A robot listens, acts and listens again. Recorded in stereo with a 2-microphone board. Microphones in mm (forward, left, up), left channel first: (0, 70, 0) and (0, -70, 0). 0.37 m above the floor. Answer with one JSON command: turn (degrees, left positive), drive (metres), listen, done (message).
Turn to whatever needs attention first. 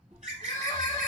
{"turn": 30}
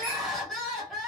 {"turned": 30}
{"done": "Found it: crying, straight ahead."}